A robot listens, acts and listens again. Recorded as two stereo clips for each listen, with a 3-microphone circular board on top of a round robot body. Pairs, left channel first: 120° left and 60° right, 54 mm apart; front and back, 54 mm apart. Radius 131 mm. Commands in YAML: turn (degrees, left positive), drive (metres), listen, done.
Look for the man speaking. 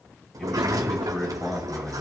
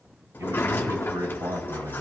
turn: -170
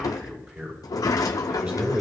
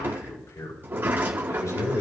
done: "Found it: a man speaking, straight ahead."